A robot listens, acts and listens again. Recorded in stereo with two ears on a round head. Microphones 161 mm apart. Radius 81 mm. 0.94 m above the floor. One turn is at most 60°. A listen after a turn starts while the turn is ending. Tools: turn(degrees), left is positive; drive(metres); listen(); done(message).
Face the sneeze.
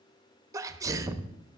turn(degrees=-20)
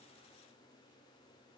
listen()
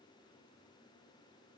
done("I heard a sneeze, but can't make it out now. It was about straight ahead or 140° right.")